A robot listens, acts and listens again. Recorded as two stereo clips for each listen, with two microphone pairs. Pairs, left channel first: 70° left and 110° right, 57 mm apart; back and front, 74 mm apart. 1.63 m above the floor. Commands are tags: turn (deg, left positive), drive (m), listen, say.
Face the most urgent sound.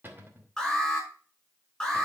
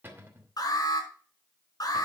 <turn deg="155"/>
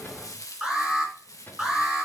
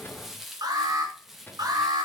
<turn deg="-25"/>
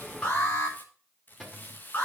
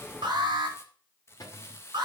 <turn deg="15"/>
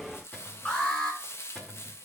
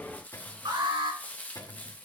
<say>Found it: an alarm, straight ahead.</say>